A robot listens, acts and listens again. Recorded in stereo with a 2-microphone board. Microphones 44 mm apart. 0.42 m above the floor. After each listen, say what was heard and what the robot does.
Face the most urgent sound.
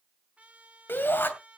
The shout: about 55° left or 125° left. Turn 55° left.
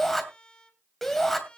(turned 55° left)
So it is at 10° left. Turn 10° left.
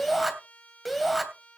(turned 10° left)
Facing the shout.